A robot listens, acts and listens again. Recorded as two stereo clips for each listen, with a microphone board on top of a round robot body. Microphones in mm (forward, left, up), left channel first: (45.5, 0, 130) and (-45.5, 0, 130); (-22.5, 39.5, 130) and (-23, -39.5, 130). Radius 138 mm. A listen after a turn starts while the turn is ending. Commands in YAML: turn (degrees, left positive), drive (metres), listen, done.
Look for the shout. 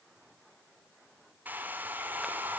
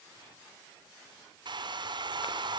listen: true
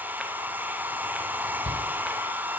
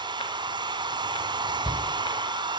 turn: -170
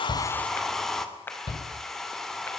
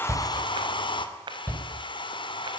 turn: 25
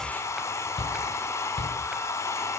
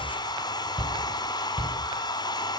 done: "Found it: a shout, straight ahead."